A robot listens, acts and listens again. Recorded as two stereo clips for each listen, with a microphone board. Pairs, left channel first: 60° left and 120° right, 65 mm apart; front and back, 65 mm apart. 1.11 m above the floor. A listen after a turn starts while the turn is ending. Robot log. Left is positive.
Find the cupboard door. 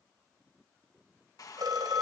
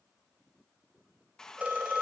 cmd idle
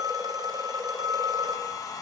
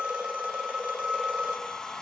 cmd idle
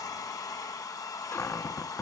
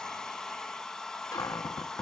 note: The cupboard door: 10° left.
cmd yaw +10
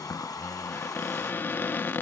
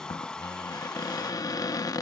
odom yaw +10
end: Facing the cupboard door.